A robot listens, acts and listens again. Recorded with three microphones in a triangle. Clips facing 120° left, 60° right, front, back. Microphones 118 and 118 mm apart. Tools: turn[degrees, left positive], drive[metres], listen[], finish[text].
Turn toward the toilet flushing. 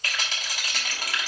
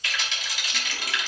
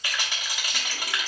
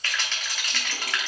Action: listen[]
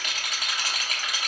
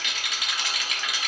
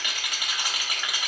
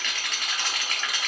Action: listen[]
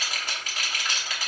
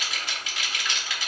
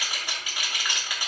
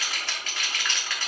Action: finish[I can't make out a toilet flushing to turn to.]